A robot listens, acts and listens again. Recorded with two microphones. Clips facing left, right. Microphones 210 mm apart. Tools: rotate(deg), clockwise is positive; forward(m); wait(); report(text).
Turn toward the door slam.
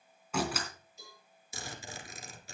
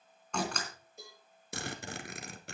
rotate(-30)
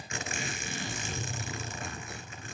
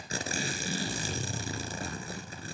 wait()
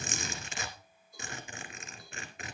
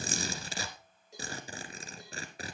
report("I heard a door slam, but can't make it out now. It was about 25° right or 145° left.")